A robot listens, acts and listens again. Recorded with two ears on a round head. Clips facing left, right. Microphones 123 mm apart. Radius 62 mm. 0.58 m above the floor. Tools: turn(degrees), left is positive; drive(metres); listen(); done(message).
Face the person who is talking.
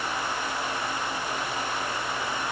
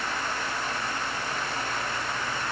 listen()
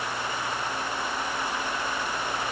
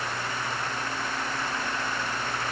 listen()
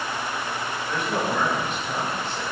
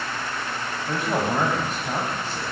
turn(degrees=-35)
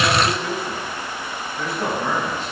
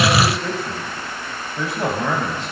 turn(degrees=-110)
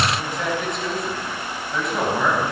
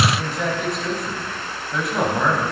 done("Facing the man speaking.")